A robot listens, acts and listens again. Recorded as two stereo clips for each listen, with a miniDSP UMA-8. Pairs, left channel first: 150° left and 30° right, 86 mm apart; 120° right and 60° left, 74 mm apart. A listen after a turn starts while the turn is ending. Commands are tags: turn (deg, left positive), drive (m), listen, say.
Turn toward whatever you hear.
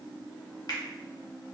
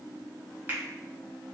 <turn deg="120"/>
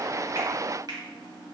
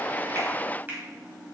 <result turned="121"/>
<say>Found it: a finger snap, straight ahead, 1 to 2 m away.</say>